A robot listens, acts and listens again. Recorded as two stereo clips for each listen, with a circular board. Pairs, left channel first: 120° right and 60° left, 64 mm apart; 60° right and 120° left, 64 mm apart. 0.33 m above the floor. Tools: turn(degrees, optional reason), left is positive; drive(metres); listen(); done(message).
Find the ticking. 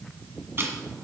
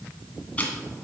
done("Facing the ticking, 2 to 4 m away.")